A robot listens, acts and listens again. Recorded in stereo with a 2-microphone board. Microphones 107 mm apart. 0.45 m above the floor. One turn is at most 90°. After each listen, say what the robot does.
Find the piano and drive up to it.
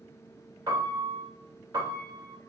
Turn 35° right.
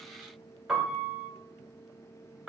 Drive 1.0 m forward.
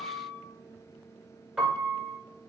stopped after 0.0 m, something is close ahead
Blocked. The piano is further on, straight ahead.